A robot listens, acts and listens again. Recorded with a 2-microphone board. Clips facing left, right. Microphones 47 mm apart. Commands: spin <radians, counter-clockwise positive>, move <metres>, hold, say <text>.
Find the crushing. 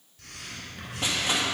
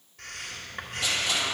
spin 0.61
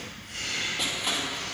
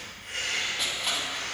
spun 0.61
say Found it: crushing, straight ahead, 1 to 2 m away.